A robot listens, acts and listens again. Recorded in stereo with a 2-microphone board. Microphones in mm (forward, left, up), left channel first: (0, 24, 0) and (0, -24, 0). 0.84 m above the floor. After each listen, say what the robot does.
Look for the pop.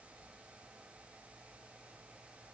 Keep listening.
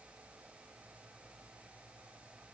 Keep listening.
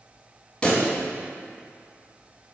Turn 20° left.
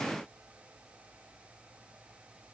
Keep listening.
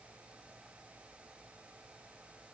I heard a pop, but can't make it out now. It was about straight ahead or 140° left.